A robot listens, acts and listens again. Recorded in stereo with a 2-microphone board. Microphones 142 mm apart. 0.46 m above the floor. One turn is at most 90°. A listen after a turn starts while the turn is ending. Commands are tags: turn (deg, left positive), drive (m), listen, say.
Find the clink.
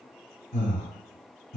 <listen/>
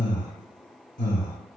<listen/>
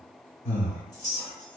<turn deg="50"/>
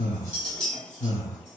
<say>Facing the clink.</say>